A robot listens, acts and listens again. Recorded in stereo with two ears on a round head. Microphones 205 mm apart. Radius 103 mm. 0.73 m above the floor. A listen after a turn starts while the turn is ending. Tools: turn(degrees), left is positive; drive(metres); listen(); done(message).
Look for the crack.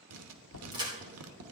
turn(degrees=-20)
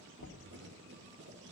listen()
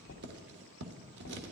done("I heard a crack, but can't make it out now. It was about straight ahead or 140° right.")